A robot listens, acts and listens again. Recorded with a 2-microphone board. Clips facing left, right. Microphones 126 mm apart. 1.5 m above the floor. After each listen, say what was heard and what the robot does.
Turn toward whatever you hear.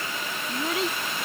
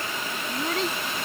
Turn 30° left.
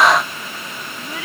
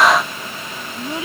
So it is at 25° right. Turn 25° right.
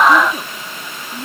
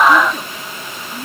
Found it: a child speaking, straight ahead.